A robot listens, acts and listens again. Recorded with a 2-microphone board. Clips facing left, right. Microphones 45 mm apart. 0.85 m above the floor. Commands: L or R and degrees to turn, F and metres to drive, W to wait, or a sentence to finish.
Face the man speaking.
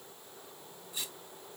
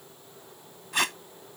W
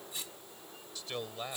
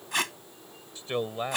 R30
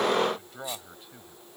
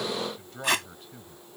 Facing the man speaking.